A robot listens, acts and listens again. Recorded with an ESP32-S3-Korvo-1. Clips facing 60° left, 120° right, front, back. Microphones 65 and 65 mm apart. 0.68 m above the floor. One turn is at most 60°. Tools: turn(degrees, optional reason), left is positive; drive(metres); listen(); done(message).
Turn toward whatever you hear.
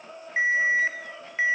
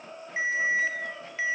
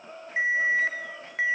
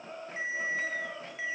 done("Found it: an alarm, straight ahead, 2 to 4 m away.")